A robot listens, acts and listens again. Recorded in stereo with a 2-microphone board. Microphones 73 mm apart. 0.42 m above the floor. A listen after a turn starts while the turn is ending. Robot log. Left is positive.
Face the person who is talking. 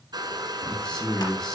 cmd yaw +30
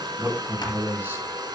note: So it is at 25° right.
cmd yaw -25
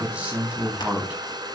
note: The man speaking is now 20° right.
cmd yaw -20
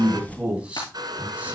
note: The man speaking is now 20° right.
cmd yaw -20
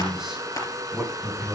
end: Found it: a man speaking, straight ahead, 2 to 4 m away.